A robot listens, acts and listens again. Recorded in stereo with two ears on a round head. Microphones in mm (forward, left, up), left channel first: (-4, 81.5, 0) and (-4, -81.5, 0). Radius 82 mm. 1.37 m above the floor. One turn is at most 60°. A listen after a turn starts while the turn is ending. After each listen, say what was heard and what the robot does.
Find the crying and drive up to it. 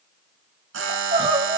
The crying: about 35° right or 145° right. Turn 35° right.
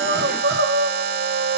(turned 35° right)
So it is at 110° right. Turn 60° right.
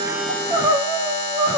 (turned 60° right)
The crying is now 25° right. Turn 25° right.
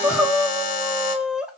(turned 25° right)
Drive 1.0 m forward.
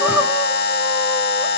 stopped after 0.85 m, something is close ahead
Keep listening.
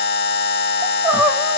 The crying is now 10° right. Turn 10° right.
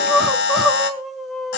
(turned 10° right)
I am next to the crying.